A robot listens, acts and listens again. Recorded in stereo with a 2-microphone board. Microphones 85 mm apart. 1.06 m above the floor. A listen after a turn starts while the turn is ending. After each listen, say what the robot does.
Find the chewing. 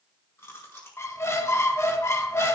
Turn 30° left.
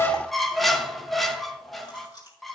Turn 120° left.
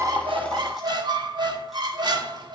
Keep listening.
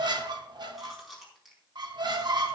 Found it: chewing, straight ahead, over 4 m away.